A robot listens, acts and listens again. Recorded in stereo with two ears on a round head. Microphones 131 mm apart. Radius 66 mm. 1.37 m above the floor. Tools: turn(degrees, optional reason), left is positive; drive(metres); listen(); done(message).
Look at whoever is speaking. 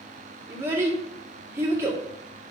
turn(degrees=-20, reason="The child speaking: about 20° right or 160° right.")
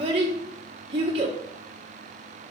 turn(degrees=-135, reason="So it is at 135° right.")
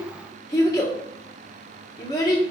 turn(degrees=25, reason="The child speaking is now 25° left.")
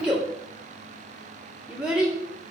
done("Facing the child speaking.")